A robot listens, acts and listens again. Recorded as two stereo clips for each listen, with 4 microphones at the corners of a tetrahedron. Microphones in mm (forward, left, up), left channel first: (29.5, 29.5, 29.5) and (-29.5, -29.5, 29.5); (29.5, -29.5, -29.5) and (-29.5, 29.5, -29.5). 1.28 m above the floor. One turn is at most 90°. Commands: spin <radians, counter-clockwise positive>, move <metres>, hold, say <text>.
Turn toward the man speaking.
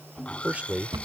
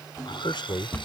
spin -1.05
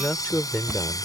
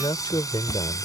spin -0.52
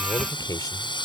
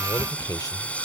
say Facing the man speaking.